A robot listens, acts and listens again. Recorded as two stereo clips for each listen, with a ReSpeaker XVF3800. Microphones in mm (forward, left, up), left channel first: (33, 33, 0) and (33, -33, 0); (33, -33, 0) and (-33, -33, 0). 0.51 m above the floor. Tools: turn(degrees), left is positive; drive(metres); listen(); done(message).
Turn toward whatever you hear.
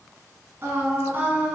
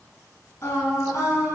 turn(degrees=-25)
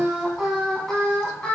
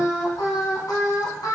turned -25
turn(degrees=20)
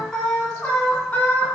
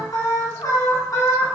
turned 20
turn(degrees=30)
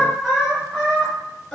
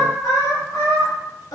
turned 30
done("Found it: singing, straight ahead, 2 to 4 m away.")